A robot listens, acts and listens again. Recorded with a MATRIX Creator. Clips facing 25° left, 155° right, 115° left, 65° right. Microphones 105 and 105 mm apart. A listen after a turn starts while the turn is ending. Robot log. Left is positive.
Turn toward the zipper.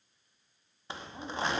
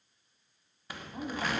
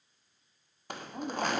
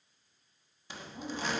note: The zipper: 85° left.
cmd yaw +85
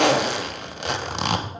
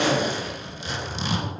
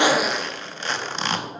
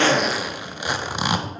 note: The zipper is now 10° left.
cmd yaw +10
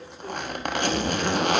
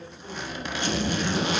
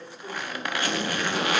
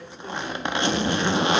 end: Facing the zipper.